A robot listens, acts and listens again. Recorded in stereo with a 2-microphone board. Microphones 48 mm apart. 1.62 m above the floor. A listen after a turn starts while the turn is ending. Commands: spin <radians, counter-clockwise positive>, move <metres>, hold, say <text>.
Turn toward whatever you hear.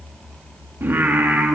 spin -0.79
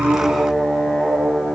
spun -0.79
say Facing the singing.